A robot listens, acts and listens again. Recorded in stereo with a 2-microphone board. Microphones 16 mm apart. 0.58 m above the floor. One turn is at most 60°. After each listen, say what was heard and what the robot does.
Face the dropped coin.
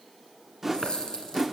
The dropped coin: about 65° left or 115° left. Turn 60° left.
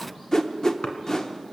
Keep listening.
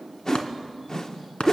I heard a dropped coin, but can't make it out now. It was about 5° left or 55° left.